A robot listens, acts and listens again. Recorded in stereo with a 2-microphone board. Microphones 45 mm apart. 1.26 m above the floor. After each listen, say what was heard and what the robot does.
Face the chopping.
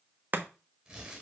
The chopping: about 40° right or 140° right. Turn 40° right.
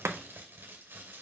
So it is at 95° right. Turn 95° right.
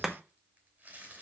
The chopping is now 10° right. Turn 10° right.
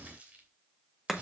Facing the chopping.